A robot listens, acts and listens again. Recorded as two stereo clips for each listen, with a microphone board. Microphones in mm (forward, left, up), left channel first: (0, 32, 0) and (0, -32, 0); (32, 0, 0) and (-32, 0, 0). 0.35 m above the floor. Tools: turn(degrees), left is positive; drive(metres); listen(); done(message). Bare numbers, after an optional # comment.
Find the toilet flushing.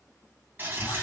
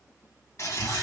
# The toilet flushing: 35° right.
turn(-35)
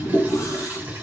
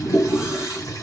# The toilet flushing is now 25° right.
turn(-25)
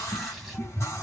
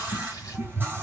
listen()
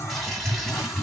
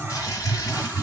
listen()
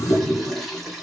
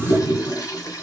done("Found it: a toilet flushing, straight ahead.")